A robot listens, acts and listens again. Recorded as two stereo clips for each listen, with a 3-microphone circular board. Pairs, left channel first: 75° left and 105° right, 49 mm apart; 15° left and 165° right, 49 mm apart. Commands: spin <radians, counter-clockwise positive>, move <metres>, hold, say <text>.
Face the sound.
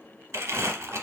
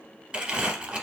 spin -1.75
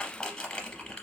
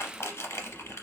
say Facing the crumpling, under 1 m away.